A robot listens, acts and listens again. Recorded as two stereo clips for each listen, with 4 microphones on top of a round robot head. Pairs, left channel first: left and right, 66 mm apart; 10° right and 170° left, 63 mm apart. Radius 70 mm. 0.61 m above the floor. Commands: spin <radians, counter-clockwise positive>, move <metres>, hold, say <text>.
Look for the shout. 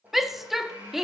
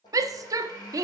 spin -3.05
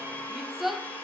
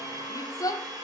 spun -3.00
say Found it: a shout, straight ahead, 1 to 2 m away.